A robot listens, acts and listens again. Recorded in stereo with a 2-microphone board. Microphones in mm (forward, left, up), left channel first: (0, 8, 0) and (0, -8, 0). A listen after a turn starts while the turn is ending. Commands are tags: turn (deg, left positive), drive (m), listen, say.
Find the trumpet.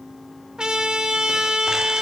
<turn deg="-55"/>
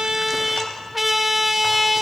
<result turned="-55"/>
<turn deg="-20"/>
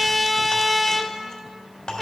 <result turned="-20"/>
<say>Facing the trumpet.</say>